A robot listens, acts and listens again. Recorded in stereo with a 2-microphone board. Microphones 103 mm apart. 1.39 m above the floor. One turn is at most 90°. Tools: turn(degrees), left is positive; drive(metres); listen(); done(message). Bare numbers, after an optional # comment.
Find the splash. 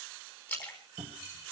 # The splash: about 20° left or 160° left.
turn(20)
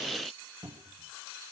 listen()
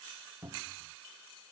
done("I heard a splash, but can't make it out now. It was about straight ahead or 140° left.")